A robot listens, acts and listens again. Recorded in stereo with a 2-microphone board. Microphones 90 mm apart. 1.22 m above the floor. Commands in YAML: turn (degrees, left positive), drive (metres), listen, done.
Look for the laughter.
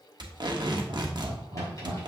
turn: -75
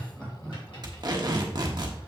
turn: 15
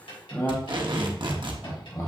turn: 35
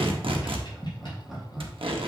done: "Facing the laughter, 1 to 2 m away."